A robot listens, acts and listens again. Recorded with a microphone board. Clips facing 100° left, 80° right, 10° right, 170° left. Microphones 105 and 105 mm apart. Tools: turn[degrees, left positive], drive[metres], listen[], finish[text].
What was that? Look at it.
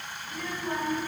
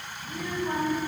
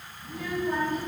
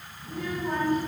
Thought: The child speaking: 155° right.
Action: turn[-155]
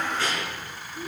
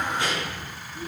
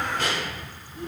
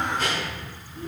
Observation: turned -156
Thought: The child speaking is now 15° right.
Action: turn[-15]
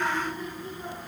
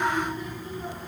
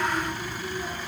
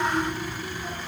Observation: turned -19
Action: finish[Facing the child speaking, 2 to 4 m away.]